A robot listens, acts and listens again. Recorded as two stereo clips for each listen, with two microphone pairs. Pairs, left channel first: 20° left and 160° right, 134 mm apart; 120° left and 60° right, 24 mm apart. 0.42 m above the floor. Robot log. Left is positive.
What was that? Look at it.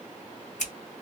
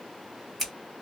note: The scissors: 30° left.
cmd yaw +30
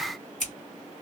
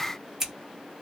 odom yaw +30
end: Found it: scissors, straight ahead, 1 to 2 m away.